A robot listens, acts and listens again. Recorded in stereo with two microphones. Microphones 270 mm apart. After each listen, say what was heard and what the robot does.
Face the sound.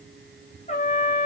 The trumpet: about 25° left or 155° left. Turn 25° left.
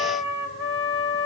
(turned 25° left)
So it is at 130° left. Turn 130° left.
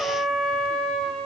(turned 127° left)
Found it: a trumpet, straight ahead, 2 to 4 m away.